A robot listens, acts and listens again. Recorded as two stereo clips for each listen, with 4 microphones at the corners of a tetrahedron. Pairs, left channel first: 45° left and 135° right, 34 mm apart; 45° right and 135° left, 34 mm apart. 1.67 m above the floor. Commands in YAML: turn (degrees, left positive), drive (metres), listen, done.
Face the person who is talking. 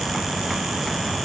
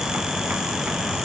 listen: true
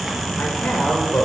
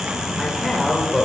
turn: 50
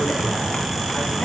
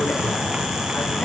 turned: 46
listen: true
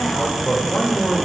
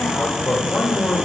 done: "Facing the man speaking, over 4 m away."